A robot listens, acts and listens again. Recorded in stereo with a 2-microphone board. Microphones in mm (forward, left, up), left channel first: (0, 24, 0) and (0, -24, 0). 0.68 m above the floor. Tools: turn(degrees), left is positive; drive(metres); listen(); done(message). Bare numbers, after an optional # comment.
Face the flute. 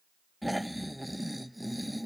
listen()
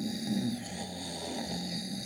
listen()
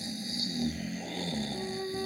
turn(-30)
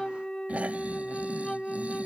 # So it is at 20° left.
turn(20)
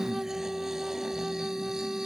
done("Facing the flute.")